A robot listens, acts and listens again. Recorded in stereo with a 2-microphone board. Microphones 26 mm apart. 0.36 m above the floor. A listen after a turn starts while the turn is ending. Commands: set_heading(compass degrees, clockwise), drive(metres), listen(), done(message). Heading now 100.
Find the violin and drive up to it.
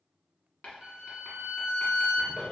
set_heading(115)
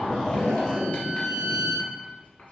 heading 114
set_heading(264)
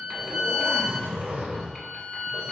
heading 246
set_heading(261)
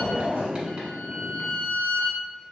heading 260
drive(1.0)
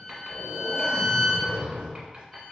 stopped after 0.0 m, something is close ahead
done("Blocked. The violin is further on, straight ahead.")